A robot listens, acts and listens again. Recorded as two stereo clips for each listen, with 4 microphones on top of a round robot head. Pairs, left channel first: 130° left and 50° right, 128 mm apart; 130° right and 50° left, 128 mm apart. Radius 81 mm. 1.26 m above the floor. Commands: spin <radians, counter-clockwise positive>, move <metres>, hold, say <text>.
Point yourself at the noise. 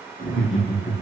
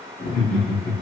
spin -2.44
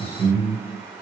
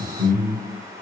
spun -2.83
spin 0.35
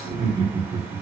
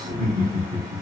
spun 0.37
say Found it: laughter, straight ahead, 1 to 2 m away.